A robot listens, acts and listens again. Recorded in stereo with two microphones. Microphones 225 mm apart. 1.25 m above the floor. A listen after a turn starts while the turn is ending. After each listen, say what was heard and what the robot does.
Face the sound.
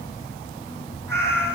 Turn 30° left.
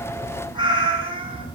So it is at 25° right. Turn 25° right.
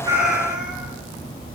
Facing the cat meowing.